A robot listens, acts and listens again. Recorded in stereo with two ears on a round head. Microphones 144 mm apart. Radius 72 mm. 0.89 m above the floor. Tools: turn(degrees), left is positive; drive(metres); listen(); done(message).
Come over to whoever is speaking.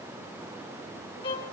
listen()
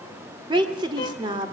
turn(degrees=-30)
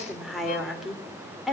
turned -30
drive(metres=1.0)
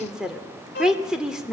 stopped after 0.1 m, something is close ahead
done("Something is in my way. I am facing the woman speaking but have not reached it.")